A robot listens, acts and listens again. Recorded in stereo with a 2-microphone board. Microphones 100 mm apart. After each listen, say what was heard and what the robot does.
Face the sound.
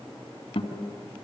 Turn 90° left.
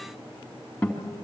So it is at 10° left. Turn 10° left.
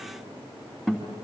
Facing the guitar.